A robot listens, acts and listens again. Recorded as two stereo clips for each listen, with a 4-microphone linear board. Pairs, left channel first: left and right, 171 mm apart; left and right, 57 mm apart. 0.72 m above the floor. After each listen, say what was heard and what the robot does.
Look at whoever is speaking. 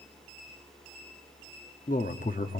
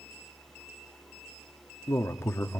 The man speaking: about 55° left or 125° left. Turn 55° left.
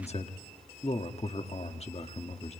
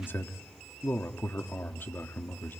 So it is at 45° left. Turn 45° left.
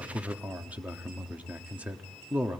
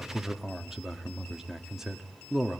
The man speaking is now 10° right. Turn 10° right.
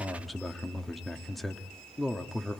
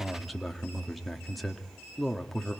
Found it: a man speaking, straight ahead, 1 to 2 m away.